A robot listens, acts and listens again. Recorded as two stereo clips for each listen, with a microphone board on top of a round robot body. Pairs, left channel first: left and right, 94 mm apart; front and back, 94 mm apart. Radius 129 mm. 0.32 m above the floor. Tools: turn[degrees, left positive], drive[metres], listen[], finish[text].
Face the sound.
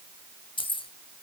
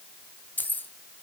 Thought: The keys jangling: 70° left.
Action: turn[70]
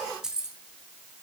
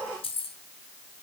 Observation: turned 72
Action: finish[Found it: keys jangling, straight ahead.]